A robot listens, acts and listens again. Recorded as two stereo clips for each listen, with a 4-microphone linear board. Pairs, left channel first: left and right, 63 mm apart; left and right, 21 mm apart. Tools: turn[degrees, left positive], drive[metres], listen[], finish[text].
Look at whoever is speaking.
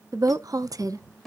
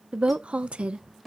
Thought: The woman speaking: about 65° right or 115° right.
Action: turn[-65]
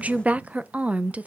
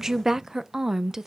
Thought: So it is at 25° right.
Action: turn[-25]
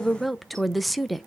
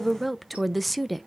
Action: finish[Found it: a woman speaking, straight ahead.]